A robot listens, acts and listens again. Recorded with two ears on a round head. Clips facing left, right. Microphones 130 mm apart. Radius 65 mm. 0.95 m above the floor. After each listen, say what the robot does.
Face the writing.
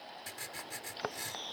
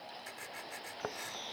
Turn 45° left.
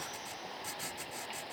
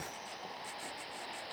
Turn 90° left.
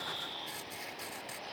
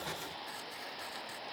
Keep listening.
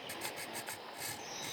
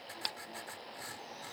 Turn 25° left.
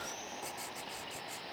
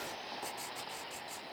Facing the writing.